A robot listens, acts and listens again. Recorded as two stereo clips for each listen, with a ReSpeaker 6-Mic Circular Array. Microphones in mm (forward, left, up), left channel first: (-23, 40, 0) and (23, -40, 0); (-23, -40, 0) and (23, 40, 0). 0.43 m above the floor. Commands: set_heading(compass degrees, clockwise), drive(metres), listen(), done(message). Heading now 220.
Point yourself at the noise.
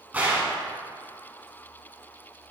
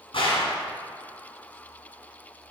set_heading(355)
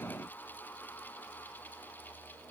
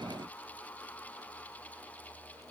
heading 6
set_heading(351)
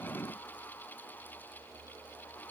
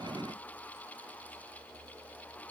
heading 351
done("Facing where the gunshot came from. I can't hear it now.")